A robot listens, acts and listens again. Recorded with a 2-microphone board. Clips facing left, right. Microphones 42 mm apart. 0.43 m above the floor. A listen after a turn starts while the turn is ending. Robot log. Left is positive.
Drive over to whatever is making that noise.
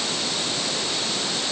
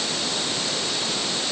cmd idle
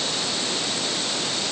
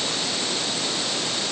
cmd idle
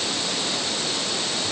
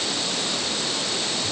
end: I can't make out anything to turn to.